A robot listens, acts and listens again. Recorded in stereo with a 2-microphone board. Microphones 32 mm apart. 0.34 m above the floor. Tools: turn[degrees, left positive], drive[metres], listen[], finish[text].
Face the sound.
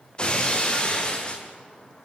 Thought: The breaking glass: about 30° left or 150° left.
Action: turn[30]
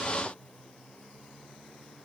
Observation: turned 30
Action: listen[]
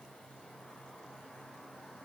Action: finish[I heard breaking glass, but can't make it out now. It was about straight ahead or 120° left.]